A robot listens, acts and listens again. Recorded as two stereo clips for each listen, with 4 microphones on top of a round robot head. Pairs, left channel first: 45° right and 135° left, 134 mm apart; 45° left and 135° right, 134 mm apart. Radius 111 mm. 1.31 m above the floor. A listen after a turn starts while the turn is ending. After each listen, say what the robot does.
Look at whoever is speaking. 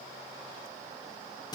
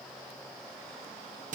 Keep listening.
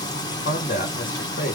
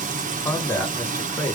Turn 25° right.
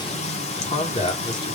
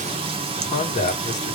Turn 10° left.
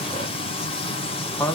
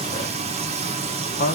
Turn 30° left.
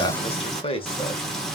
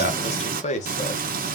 Turn 10° left.
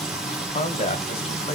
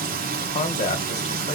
Found it: a man speaking, straight ahead, 1 to 2 m away.